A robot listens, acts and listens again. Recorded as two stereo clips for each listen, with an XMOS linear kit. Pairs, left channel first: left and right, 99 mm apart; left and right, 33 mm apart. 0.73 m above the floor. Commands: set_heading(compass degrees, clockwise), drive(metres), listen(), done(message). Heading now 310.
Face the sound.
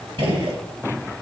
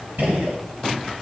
set_heading(20)
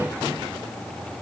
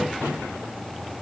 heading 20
listen()
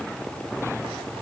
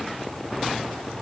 done("I heard a gunshot, but can't make it out now. It was about straight ahead or 40° right.")